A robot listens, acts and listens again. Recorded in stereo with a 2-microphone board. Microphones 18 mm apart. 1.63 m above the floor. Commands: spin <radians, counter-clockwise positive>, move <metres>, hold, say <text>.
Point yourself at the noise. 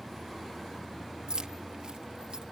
spin -0.96
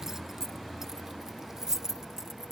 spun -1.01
spin -0.61
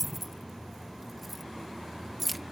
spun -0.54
say Facing the keys jangling.